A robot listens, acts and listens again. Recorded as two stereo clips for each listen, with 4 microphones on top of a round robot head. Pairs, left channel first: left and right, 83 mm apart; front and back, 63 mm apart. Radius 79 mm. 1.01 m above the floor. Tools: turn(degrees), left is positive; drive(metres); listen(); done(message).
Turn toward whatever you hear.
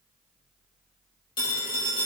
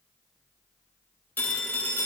turn(degrees=65)
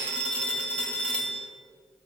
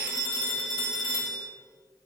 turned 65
turn(degrees=15)
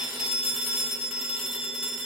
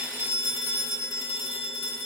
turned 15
done("Facing the phone ringing.")